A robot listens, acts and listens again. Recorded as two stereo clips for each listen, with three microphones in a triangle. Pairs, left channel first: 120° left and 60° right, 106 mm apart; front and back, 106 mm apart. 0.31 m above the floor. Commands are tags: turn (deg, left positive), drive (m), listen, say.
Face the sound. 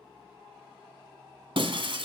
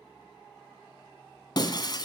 <turn deg="-40"/>
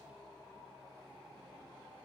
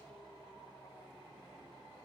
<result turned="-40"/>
<say>Facing where the breaking glass came from. I can't hear it now.</say>